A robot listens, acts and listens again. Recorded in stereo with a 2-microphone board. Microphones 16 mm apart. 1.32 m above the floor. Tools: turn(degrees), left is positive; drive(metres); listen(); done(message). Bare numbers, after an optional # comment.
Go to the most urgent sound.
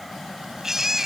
# The baby crying: about 30° right or 150° right.
turn(-30)
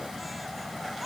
listen()
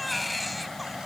drive(1.0)
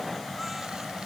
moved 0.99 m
listen()
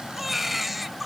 # The baby crying is now 10° right.
turn(-10)
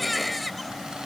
drive(1.0)
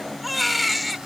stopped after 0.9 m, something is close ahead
done("Arrived at the baby crying, straight ahead.")